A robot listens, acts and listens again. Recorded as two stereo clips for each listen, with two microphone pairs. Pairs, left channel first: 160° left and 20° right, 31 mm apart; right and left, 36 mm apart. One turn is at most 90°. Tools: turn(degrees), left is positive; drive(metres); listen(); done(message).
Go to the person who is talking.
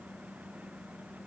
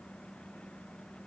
listen()
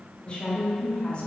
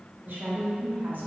turn(degrees=90)
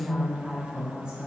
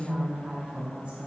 turn(degrees=35)
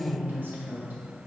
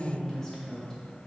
turn(degrees=-10)
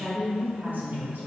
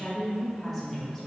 drive(metres=1.0)
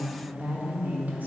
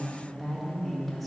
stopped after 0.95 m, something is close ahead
done("I am next to the woman speaking.")